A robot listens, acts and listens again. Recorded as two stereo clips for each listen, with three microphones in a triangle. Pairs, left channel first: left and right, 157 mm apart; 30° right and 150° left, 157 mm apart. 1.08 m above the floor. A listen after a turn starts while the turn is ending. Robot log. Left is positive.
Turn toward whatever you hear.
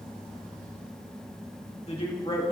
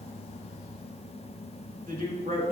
note: The man speaking: 140° left.
cmd yaw +140
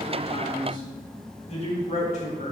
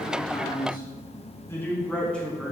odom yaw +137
note: The man speaking is now 55° left.
cmd yaw +55
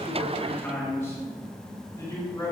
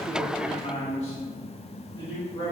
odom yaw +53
note: The man speaking is now 20° left.
cmd yaw +20
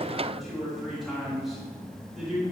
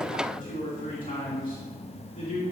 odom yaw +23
end: Facing the man speaking.